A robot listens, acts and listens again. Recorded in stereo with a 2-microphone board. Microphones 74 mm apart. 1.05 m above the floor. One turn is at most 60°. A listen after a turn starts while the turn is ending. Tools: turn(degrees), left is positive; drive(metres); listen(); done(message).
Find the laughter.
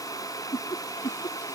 turn(degrees=60)
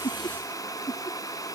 turn(degrees=50)
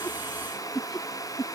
done("Facing the laughter.")